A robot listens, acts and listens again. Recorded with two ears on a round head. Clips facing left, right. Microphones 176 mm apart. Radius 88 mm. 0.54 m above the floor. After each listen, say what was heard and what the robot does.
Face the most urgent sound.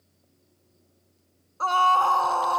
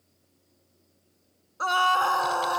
The scream: about 15° right or 165° right. Turn 15° right.
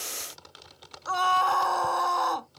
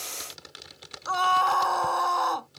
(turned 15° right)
Found it: a scream, straight ahead.